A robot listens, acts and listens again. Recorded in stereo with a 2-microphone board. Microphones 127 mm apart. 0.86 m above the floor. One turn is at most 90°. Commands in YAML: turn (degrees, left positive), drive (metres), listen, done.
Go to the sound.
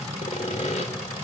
turn: 60
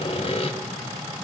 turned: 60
turn: 55
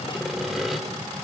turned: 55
drive: 1.0
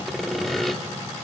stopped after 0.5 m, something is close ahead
done: "Blocked. The sawing is further on, straight ahead."